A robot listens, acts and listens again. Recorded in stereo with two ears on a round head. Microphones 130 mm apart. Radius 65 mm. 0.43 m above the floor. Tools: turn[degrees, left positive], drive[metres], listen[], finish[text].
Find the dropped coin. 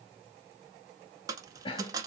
Thought: The dropped coin: about 25° right or 155° right.
Action: turn[-25]
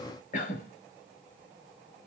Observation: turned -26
Action: listen[]
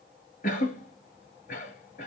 Action: finish[I heard a dropped coin, but can't make it out now. It was about straight ahead or 130° right.]